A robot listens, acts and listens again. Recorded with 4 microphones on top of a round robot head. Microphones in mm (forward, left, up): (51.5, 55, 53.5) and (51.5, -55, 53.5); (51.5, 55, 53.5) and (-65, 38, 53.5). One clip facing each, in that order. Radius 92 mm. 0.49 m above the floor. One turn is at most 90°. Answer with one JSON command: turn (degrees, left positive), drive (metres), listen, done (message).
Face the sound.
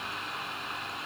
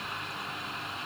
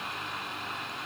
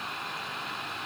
{"listen": true}
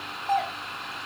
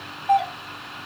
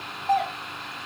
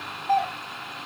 {"turn": -15}
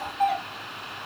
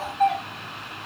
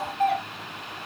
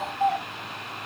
{"done": "Facing the doorbell, 2 to 4 m away."}